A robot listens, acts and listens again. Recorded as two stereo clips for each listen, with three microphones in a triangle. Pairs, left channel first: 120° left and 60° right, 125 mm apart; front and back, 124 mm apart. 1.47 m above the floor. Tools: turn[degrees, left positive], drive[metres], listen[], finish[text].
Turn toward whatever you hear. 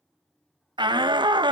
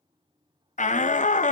Action: finish[Facing the shout.]